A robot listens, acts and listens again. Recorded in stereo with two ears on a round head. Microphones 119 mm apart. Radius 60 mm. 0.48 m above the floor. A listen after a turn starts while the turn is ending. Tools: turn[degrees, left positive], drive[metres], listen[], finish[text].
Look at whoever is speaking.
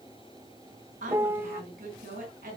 Thought: The woman speaking: about 65° right or 115° right.
Action: turn[-65]
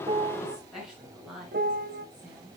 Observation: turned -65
Action: finish[Found it: a woman speaking, straight ahead.]